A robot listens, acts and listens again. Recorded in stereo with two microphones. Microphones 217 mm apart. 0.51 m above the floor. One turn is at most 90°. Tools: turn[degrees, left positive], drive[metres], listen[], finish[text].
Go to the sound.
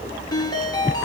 Thought: The ringtone: about 15° left or 165° left.
Action: turn[15]
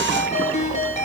Thought: So it is at 150° left.
Action: turn[90]
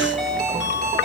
Thought: The ringtone is now 55° left.
Action: turn[55]
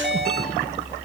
Action: drive[1.0]
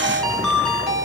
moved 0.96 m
Action: drive[1.0]
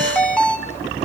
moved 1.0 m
Action: drive[1.0]
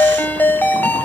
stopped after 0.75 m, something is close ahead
Thought: The ringtone is now 10° left.
Action: turn[10]
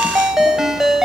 Action: finish[Arrived at the ringtone, straight ahead.]